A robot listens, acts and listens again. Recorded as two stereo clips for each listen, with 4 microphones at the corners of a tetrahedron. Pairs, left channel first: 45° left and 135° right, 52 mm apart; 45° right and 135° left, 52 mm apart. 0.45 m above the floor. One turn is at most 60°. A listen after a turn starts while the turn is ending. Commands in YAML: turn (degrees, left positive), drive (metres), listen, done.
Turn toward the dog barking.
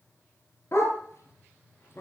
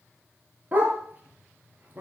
turn: 60
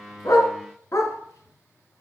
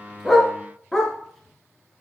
turn: 40
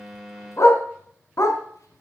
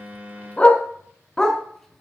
turn: 35
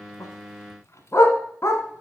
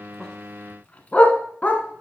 turn: 20
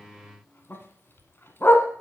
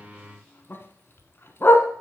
done: "Found it: a dog barking, straight ahead, 1 to 2 m away."